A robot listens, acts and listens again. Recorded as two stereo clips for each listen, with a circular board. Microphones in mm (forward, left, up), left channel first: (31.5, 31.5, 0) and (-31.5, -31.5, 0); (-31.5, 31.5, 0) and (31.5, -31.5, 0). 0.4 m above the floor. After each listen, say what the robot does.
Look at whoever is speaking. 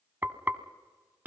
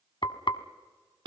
Keep listening.
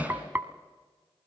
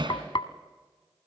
Keep listening.
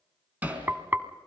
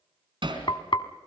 I can't make out anyone speaking to turn to.